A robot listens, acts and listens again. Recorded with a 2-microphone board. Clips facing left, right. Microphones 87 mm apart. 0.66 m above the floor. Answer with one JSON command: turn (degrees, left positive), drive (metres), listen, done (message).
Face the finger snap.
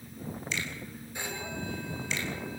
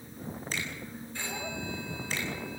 {"listen": true}
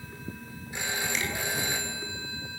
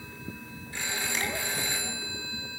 {"listen": true}
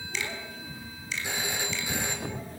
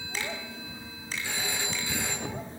{"turn": -40}
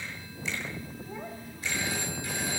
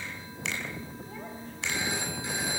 {"turn": -95}
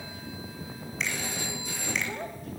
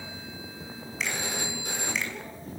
{"listen": true}
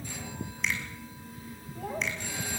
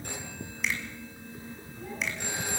{"listen": true}
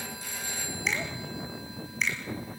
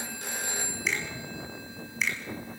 {"done": "Found it: a finger snap, straight ahead, over 4 m away."}